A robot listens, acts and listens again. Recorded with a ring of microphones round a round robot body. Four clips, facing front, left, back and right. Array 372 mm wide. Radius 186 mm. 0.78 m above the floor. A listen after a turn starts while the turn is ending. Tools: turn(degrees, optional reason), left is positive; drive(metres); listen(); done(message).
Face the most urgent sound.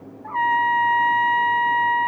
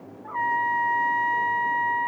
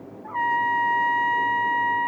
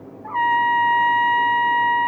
listen()
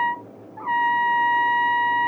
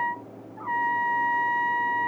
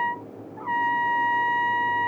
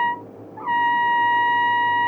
listen()
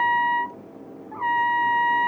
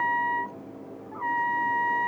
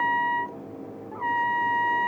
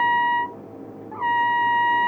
done("I can't make out anything urgent to turn to.")